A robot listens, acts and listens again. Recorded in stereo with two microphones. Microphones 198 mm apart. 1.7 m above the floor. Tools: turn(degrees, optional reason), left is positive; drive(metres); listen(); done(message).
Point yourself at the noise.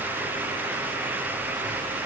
listen()
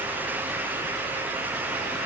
listen()
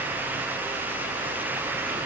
done("I can't make out anything to turn to.")